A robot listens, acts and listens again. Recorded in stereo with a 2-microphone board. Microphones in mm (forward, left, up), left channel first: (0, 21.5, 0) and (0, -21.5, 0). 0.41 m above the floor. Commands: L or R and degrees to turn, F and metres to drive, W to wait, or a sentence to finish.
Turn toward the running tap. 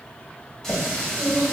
L30
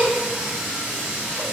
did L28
R15
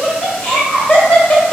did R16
W
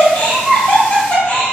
W
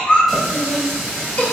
Facing the running tap.